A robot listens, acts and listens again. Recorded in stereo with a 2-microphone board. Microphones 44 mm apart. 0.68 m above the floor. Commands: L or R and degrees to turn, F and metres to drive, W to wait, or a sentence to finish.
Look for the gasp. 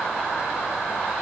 W
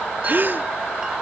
R45
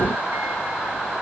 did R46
W
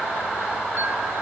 I heard a gasp, but can't make it out now. It was about straight ahead or 90° right.